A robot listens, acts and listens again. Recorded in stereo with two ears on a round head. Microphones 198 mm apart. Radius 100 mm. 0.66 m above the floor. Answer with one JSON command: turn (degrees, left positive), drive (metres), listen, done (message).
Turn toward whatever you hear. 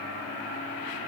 {"listen": true}
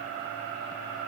{"listen": true}
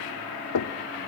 {"turn": 75}
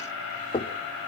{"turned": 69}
{"turn": 20}
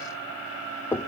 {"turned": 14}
{"turn": 10}
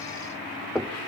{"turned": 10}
{"done": "Facing the knocking."}